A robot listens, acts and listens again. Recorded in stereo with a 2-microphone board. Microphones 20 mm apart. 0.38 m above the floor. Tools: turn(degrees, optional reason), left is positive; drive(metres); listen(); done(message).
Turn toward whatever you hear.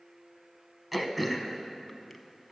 turn(degrees=-30)
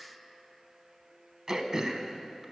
turn(degrees=-145, reason="So it is at 145° right.")
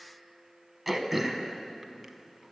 turn(degrees=-10, reason="The throat clearing is now 10° right.")
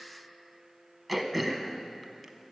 done("Found it: throat clearing, straight ahead, under 1 m away.")